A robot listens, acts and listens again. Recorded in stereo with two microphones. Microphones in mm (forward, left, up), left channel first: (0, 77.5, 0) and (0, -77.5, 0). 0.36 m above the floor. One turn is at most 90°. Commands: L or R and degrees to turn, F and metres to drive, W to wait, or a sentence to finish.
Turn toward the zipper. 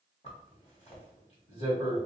L45
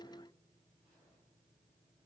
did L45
W
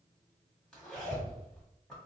Facing the zipper, 1 to 2 m away.